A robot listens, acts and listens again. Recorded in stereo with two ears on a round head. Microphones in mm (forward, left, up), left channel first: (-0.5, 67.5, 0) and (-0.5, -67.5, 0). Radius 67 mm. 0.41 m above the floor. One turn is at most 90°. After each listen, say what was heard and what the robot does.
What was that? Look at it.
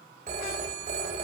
The phone ringing: about 45° right or 135° right. Turn 45° right.
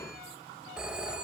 Facing the phone ringing, 1 to 2 m away.